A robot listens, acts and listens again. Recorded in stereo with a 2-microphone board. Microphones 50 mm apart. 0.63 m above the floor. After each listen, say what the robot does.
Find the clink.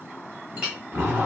Turn 25° right.
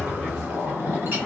Keep listening.
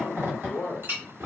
Turn 130° right.
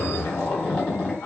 Keep listening.
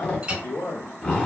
Turn 20° right.
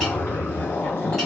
Keep listening.
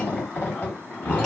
Keep listening.
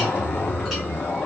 I heard a clink from this way, but can't make it out now.